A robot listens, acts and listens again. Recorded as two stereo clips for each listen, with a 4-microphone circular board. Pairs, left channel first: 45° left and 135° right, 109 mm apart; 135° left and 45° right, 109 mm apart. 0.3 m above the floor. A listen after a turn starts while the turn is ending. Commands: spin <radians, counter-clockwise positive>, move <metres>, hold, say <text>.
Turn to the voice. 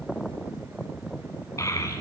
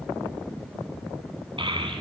spin -0.26
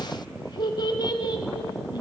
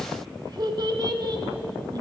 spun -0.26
say Found it: a child speaking, straight ahead.